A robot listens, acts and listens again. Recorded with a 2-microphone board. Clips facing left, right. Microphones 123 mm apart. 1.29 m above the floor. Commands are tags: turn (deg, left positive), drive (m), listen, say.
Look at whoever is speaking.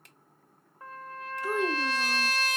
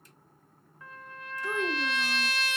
<turn deg="30"/>
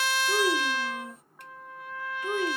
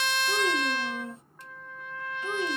<turn deg="-25"/>
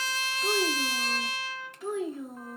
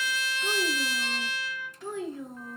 <say>Facing the child speaking.</say>